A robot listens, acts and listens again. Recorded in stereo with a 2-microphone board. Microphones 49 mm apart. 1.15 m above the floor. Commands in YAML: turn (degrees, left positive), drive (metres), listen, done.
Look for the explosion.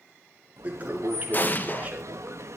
turn: 40
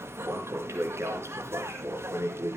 listen: true
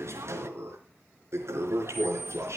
done: "I heard an explosion, but can't make it out now. It was about straight ahead or 100° left."